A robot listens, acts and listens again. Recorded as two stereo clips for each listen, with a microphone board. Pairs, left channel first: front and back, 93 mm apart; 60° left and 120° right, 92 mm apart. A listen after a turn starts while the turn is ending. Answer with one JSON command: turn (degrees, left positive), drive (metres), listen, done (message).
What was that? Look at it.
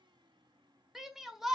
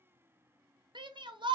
{"turn": -95}
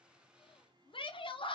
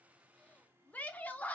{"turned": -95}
{"turn": -10}
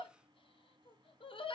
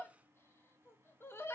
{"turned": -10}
{"done": "Facing the shout, under 1 m away."}